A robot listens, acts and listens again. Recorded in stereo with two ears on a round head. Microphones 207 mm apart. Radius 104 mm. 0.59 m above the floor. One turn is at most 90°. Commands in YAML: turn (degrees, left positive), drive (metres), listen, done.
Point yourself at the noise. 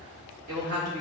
turn: -70
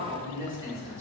turn: -15
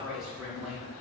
done: "Facing the woman speaking, 2 to 4 m away."